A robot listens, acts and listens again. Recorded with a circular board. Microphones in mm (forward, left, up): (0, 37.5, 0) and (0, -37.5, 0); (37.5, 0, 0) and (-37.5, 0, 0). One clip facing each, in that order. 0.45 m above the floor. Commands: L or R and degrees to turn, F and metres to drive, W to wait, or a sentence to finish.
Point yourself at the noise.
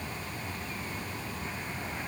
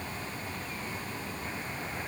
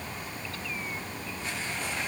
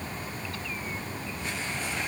W
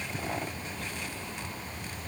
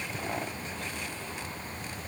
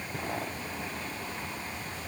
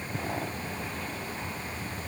W
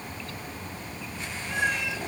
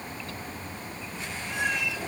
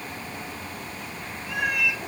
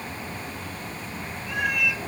L85
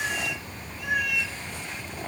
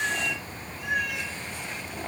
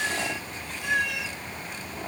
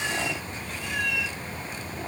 Facing the cat meowing, 2 to 4 m away.